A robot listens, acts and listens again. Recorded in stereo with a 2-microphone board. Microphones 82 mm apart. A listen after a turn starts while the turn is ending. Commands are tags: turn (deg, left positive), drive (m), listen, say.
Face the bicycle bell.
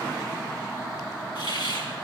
<listen/>
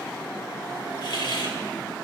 <listen/>
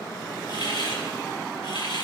<say>I can't make out a bicycle bell, only a hiss.</say>